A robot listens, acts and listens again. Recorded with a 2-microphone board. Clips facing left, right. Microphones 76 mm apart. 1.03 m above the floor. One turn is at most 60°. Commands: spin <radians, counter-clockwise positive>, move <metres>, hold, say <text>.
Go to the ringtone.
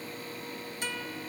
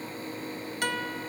hold
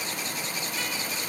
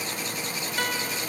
hold
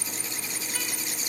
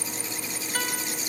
say I can't make out a ringtone, only a guitar.